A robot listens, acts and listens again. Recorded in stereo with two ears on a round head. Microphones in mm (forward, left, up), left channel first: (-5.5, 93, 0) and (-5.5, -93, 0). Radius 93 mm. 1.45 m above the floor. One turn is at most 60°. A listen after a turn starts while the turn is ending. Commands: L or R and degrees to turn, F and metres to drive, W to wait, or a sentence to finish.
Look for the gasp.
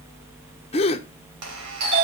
L25
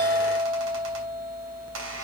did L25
W
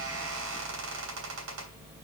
I heard a gasp, but can't make it out now. It was about straight ahead or 130° left.